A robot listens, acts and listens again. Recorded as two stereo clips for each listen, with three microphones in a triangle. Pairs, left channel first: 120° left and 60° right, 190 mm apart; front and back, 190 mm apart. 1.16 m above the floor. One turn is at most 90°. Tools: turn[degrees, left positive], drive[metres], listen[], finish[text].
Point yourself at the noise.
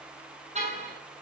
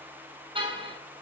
Thought: The car horn: 115° right.
Action: turn[-90]
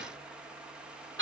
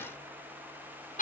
Thought: The car horn is now 50° right.
Action: turn[-50]
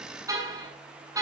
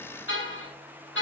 Thought: The car horn is now 15° left.
Action: turn[15]
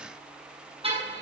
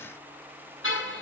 Action: finish[Facing the car horn, over 4 m away.]